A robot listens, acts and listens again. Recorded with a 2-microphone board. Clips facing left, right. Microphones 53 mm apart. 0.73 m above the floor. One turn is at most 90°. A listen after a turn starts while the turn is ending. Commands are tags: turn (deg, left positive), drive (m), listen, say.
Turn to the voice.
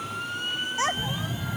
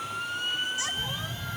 <turn deg="45"/>
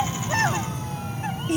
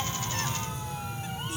<turn deg="85"/>
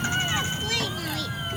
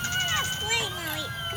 <listen/>
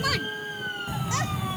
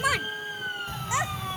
<turn deg="-20"/>
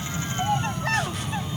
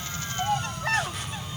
<say>Facing the child speaking.</say>